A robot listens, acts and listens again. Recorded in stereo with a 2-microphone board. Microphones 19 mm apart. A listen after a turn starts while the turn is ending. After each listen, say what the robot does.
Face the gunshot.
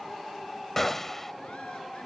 Turn 30° left.
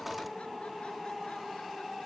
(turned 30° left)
Keep listening.
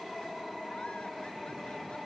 I heard a gunshot, but can't make it out now. It was about 15° right or 135° left.